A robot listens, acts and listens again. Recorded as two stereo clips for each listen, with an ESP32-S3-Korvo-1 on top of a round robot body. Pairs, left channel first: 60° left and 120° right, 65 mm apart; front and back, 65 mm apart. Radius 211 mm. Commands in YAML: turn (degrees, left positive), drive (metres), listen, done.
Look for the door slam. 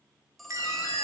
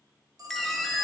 turn: 90
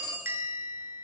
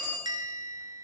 done: "Facing where the door slam came from. I can't hear it now."